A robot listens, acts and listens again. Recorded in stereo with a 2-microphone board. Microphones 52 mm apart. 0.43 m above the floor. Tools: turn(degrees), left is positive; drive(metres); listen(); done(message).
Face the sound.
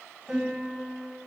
turn(degrees=30)
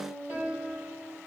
turn(degrees=-35)
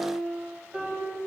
turn(degrees=-20)
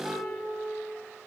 done("Found it: a piano, straight ahead.")